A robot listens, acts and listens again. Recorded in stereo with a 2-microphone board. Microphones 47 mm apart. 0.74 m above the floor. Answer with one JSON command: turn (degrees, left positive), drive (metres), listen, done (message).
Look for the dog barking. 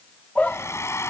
{"turn": 25}
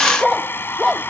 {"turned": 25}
{"done": "Facing the dog barking."}